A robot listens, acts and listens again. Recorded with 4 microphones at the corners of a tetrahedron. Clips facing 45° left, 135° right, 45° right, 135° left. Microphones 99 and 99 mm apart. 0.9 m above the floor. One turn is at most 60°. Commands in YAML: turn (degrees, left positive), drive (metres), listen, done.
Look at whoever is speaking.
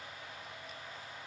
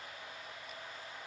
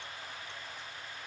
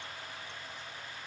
listen: true
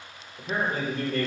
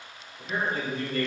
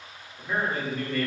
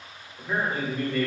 turn: 50
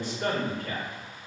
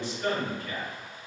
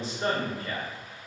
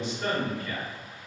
done: "Found it: a man speaking, straight ahead, 1 to 2 m away."